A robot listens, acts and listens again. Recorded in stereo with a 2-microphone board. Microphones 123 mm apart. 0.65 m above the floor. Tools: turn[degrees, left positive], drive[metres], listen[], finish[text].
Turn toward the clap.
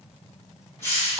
Action: listen[]
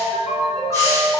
Action: listen[]
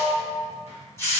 Action: finish[I can't make out a clap to turn to.]